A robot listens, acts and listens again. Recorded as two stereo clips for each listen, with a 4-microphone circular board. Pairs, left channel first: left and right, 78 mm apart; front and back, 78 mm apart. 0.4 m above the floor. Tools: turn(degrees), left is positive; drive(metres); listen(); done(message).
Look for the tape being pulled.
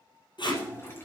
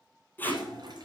turn(degrees=70)
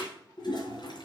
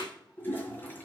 turn(degrees=-15)
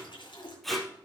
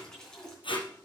done("Facing the tape being pulled.")